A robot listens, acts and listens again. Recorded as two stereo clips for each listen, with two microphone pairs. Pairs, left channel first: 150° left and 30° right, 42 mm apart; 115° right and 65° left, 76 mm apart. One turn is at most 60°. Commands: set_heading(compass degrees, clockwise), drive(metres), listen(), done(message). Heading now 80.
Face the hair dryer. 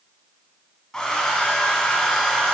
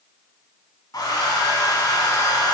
set_heading(140)
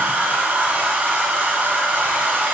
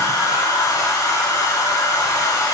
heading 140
set_heading(200)
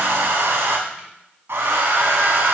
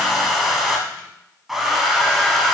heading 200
set_heading(220)
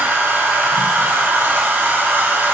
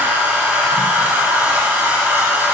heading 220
done("Facing the hair dryer, under 1 m away.")